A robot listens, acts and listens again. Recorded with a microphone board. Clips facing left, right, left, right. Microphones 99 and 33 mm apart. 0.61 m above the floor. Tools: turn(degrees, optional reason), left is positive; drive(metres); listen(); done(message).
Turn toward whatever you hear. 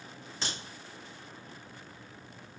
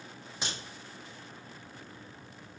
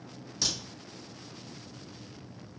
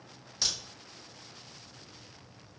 turn(degrees=-30)
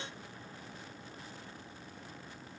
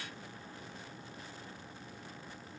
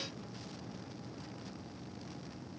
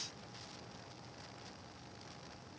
listen()
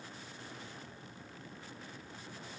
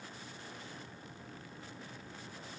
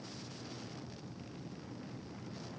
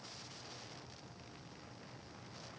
done("I heard a crack, but can't make it out now. It was about 15° left or 135° right.")